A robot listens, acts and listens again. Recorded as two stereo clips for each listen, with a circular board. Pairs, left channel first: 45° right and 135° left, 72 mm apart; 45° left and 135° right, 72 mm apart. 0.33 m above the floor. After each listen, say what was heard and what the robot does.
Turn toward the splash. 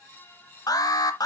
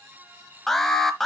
Keep listening.
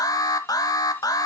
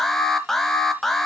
Keep listening.
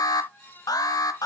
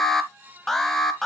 I can't make out a splash to turn to.